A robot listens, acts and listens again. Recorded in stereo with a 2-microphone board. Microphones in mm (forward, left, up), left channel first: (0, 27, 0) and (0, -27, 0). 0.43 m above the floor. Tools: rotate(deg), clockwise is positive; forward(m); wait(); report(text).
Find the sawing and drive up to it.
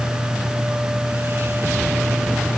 wait()
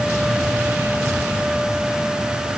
wait()
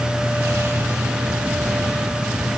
report("I can't make out sawing to turn to.")